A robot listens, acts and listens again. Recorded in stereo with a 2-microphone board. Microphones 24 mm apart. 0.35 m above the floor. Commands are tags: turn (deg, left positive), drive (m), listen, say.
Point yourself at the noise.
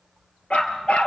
<turn deg="65"/>
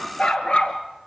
<turn deg="45"/>
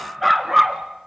<turn deg="-10"/>
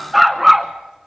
<turn deg="-10"/>
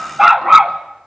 <turn deg="-20"/>
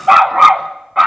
<turn deg="-10"/>
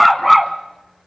<say>Facing the dog barking, 1 to 2 m away.</say>